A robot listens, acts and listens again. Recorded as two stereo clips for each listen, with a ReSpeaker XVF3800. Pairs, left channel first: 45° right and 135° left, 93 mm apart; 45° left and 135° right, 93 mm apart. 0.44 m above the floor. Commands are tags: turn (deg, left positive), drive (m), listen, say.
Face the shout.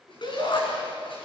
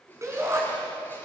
<turn deg="-80"/>
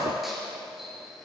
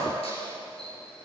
<listen/>
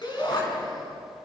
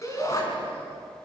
<turn deg="-10"/>
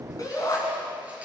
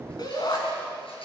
<say>Found it: a shout, straight ahead, over 4 m away.</say>